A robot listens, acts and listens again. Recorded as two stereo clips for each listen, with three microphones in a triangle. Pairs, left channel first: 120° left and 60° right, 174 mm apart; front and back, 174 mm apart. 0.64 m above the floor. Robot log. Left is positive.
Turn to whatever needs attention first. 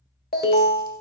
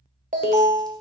note: The alarm: 145° left.
cmd yaw +145
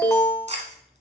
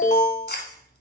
note: The alarm is now 45° left.
cmd yaw +45
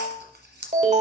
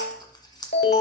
note: The alarm is now 10° right.
cmd yaw -10
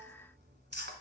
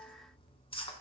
cmd idle
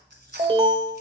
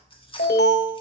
end: Found it: an alarm, straight ahead, 1 to 2 m away.